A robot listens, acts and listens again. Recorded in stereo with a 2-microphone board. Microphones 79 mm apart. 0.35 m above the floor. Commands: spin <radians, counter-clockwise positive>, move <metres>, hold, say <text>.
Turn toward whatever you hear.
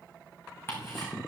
spin 0.52
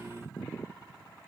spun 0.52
hold
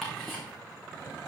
say Found it: ticking, straight ahead, over 4 m away.